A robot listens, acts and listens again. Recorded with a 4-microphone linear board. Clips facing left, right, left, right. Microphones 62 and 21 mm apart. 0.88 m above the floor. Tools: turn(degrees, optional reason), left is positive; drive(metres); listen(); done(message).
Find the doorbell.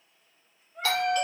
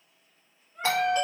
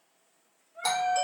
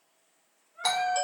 turn(degrees=-20, reason="The doorbell: about 20° right or 160° right.")
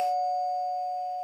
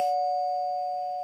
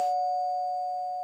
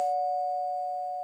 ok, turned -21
done("Found it: a doorbell, straight ahead.")